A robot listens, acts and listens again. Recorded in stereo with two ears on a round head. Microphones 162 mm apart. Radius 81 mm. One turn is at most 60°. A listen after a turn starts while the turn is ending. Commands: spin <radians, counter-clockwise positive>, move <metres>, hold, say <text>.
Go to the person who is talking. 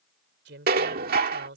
spin -1.05
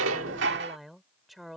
move 1.0
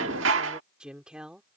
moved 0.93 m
move 1.0
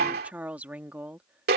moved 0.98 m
spin -0.17
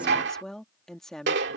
move 1.0
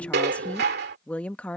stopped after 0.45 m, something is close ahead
say Arrived at the woman speaking, straight ahead.